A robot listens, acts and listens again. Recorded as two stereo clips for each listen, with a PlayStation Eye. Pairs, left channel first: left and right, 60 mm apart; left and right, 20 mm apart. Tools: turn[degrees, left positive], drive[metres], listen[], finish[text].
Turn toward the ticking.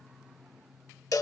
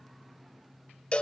Action: listen[]
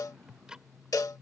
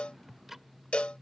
Action: turn[-30]
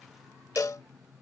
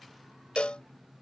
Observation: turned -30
Action: listen[]
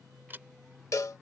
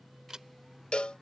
Thought: So it is at 135° right.
Action: turn[-135]
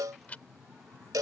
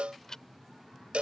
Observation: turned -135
Thought: The ticking is now 30° left.
Action: turn[30]
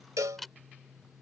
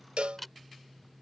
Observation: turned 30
Action: finish[Found it: ticking, straight ahead.]